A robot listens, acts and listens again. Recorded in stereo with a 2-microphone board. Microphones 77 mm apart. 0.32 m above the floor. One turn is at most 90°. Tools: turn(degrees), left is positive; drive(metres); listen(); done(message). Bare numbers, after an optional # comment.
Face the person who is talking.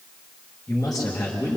# The man speaking: about 45° left or 135° left.
turn(45)
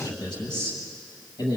# So it is at 80° left.
turn(80)
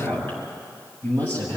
# The man speaking is now 30° left.
turn(30)
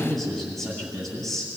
# The man speaking is now 10° left.
turn(10)
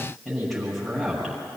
done("Facing the man speaking, over 4 m away.")